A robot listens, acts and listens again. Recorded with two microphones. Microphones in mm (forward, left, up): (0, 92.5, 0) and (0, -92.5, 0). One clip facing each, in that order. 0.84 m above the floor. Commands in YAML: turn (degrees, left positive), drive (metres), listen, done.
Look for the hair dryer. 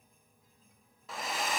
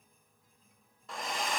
turn: 30
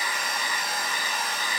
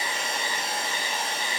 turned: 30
turn: -30
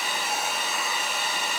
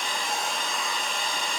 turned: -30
done: "Facing the hair dryer."